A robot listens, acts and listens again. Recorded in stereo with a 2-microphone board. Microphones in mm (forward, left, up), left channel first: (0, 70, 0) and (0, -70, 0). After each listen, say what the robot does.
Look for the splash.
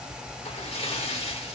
Turn 45° left.
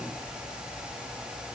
Keep listening.
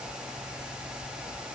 I heard a splash, but can't make it out now. It was about straight ahead or 90° left.